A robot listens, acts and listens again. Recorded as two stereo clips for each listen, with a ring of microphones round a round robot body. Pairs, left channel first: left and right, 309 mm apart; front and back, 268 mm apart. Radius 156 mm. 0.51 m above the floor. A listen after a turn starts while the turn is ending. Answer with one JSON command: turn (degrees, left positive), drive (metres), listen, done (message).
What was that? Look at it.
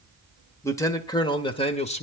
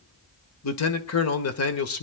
{"turn": 25}
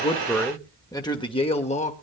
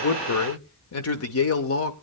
{"turn": 25}
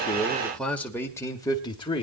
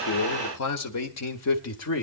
{"turn": 15}
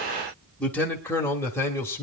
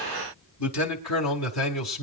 {"turn": 10}
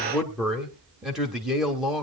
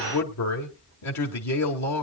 {"done": "Facing the man speaking."}